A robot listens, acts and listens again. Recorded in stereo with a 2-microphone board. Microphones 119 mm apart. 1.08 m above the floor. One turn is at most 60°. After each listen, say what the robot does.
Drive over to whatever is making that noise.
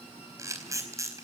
Turn 25° right.
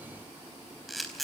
Drive 1.0 m forward.
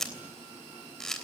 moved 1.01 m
Drive 1.0 m forward.
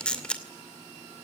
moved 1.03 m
Turn 10° left.
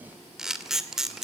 Drive 1.0 m forward.
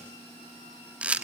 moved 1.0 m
Turn 10° right.
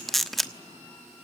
Drive 1.0 m forward.
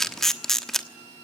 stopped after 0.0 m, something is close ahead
Arrived at the camera shutter, straight ahead.